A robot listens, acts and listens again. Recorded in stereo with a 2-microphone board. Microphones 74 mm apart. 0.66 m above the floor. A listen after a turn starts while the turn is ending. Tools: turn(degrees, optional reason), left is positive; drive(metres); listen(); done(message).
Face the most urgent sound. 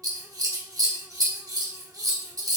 listen()
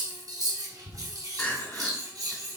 turn(degrees=25, reason="The crying: about 25° left or 155° left.")
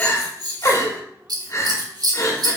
turn(degrees=125, reason="So it is at 125° left.")
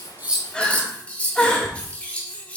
turn(degrees=15, reason="The crying is now 15° left.")
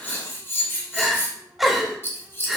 done("Found it: crying, straight ahead, 1 to 2 m away.")